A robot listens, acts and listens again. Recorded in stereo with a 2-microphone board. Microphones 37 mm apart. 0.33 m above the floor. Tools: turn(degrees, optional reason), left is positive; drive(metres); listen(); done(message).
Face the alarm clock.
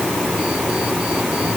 listen()
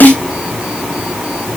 listen()
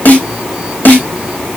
done("I can't make out an alarm clock, only a snare drum.")